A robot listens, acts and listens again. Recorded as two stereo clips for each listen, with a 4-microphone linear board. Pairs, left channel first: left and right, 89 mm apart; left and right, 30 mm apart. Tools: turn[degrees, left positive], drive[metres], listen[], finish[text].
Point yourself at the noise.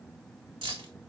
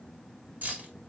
Action: turn[-90]
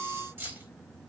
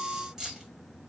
Thought: So it is at 25° right.
Action: turn[-25]
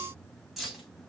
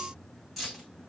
Action: finish[Found it: keys jangling, straight ahead.]